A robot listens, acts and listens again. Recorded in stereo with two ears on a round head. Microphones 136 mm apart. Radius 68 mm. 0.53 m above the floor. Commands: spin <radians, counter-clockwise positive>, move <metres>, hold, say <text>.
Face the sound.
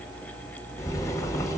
spin 0.35
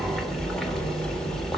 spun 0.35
say Facing the boiling.